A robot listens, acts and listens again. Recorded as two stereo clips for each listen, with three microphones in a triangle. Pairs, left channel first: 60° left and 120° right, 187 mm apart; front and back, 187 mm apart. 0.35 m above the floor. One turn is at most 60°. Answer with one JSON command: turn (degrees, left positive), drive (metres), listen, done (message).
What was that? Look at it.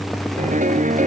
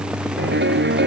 {"turn": -60}
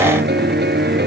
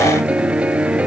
{"turn": -60}
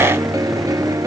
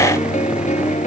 {"turn": -50}
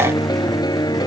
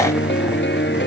{"turn": -10}
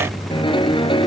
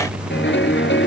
{"done": "Found it: a piano, straight ahead."}